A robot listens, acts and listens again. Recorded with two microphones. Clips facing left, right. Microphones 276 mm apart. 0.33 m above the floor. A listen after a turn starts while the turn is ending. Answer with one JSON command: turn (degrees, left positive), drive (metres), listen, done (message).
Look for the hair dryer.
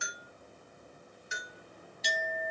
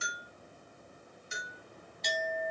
{"listen": true}
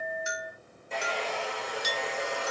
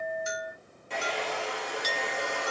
{"turn": -90}
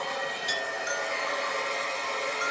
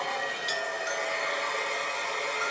{"done": "Found it: a hair dryer, straight ahead, 1 to 2 m away."}